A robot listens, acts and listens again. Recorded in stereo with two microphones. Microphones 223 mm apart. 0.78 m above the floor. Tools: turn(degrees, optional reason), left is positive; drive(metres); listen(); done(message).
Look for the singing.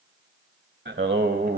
turn(degrees=-45, reason="The singing: about 45° right or 135° right.")
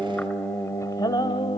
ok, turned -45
turn(degrees=25, reason="So it is at 25° left.")
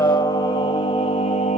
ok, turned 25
turn(degrees=30, reason="The singing is now 30° left.")
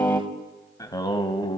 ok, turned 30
turn(degrees=20, reason="The singing is now 20° left.")
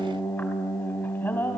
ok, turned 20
turn(degrees=10, reason="The singing is now 10° left.")
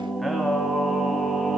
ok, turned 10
done("Facing the singing.")